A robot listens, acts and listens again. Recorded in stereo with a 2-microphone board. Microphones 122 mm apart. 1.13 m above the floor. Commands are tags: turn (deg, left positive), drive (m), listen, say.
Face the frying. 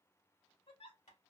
<listen/>
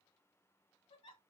<listen/>
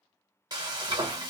<turn deg="-40"/>
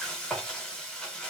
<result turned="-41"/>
<say>Facing the frying, under 1 m away.</say>